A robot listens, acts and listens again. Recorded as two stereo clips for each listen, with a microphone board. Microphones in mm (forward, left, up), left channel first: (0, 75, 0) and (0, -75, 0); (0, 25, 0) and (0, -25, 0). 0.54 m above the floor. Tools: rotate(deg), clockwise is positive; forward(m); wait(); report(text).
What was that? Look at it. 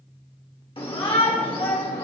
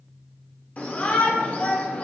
rotate(-35)
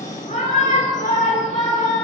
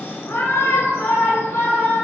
rotate(-100)
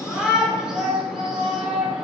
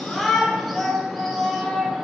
report("Found it: a shout, straight ahead.")